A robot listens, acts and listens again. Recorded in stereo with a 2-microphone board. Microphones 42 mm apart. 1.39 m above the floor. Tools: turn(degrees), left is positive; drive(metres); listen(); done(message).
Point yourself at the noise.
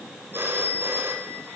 turn(degrees=-55)
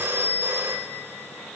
turn(degrees=-70)
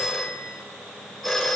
done("Facing the phone ringing, over 4 m away.")